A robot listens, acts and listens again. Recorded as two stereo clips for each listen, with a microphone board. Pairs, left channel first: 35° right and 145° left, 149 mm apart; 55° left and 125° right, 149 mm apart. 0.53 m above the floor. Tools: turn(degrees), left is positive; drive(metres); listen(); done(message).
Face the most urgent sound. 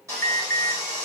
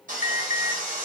turn(degrees=35)
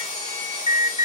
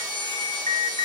done("Facing the alarm, under 1 m away.")